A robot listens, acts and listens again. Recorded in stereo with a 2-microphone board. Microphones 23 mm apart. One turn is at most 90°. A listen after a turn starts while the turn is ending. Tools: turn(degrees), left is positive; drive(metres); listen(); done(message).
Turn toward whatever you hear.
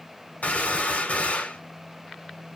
turn(degrees=90)
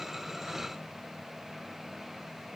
done("I heard a gunshot from this way, but can't make it out now.")